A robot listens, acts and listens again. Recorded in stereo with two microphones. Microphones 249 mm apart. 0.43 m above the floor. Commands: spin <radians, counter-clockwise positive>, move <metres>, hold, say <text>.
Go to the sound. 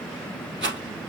spin -0.87
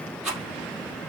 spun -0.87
move 1.0
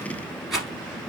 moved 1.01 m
move 1.0
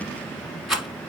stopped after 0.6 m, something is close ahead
say I am next to the rattle.